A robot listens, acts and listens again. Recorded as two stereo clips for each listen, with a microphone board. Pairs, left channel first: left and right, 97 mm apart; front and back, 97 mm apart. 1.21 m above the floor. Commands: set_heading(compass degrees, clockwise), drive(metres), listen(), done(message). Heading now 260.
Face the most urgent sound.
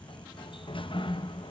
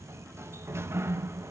listen()
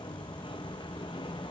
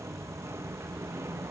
listen()
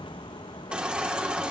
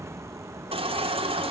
set_heading(70)
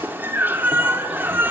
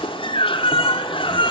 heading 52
set_heading(72)
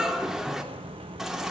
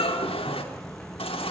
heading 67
done("Facing the baby crying, 2 to 4 m away.")